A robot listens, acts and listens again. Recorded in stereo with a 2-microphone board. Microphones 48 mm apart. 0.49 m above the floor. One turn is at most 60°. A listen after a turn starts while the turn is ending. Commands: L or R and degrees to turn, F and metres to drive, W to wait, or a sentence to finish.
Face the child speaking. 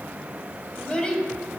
L20
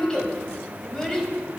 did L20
L30
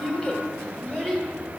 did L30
L15
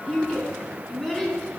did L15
L30
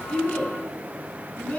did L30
L60
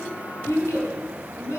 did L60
L60
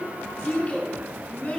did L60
L25
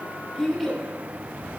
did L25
Found it: a child speaking, straight ahead.